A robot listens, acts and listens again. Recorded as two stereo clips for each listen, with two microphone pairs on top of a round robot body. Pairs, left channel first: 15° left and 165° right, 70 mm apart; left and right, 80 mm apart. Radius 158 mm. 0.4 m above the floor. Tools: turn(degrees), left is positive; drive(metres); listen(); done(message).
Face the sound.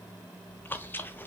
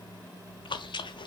turn(degrees=80)
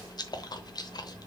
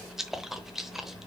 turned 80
done("Facing the chewing.")